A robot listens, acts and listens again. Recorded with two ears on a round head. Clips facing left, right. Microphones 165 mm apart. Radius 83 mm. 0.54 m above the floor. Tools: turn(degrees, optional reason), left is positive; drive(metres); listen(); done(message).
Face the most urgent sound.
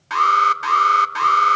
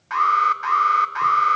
turn(degrees=40, reason="The alarm: about 40° left or 140° left.")
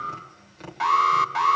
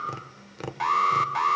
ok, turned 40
done("Found it: an alarm, straight ahead, 1 to 2 m away.")